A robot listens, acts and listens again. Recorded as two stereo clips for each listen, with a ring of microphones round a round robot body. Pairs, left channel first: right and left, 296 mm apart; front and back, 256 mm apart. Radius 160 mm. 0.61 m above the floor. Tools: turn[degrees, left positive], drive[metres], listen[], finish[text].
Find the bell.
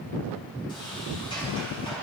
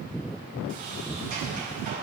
Action: listen[]
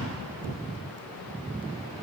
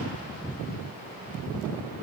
Action: listen[]
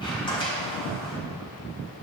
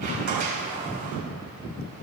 Action: finish[I can't make out a bell to turn to.]